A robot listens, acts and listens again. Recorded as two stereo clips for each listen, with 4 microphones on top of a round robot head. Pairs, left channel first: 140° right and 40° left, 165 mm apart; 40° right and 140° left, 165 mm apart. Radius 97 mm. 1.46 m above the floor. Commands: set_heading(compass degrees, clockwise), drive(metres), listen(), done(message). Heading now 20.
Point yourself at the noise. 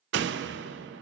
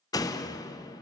set_heading(355)
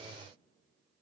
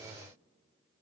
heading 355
done("I heard a door slam from this way, but can't make it out now.")